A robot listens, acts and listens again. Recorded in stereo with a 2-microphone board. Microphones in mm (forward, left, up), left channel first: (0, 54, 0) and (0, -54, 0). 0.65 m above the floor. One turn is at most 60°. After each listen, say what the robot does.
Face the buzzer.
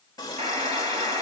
Turn 60° right.
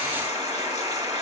Turn 40° right.
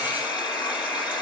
Found it: a buzzer, straight ahead.